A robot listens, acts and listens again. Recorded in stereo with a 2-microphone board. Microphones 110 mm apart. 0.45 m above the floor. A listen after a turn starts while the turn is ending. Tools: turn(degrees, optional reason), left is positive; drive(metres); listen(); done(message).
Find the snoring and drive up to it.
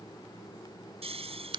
turn(degrees=-65, reason="The snoring: about 65° right or 115° right.")
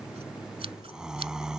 drive(metres=1.0)
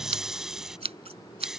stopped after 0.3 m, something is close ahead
done("Something is in my way. I am facing the snoring but have not reached it.")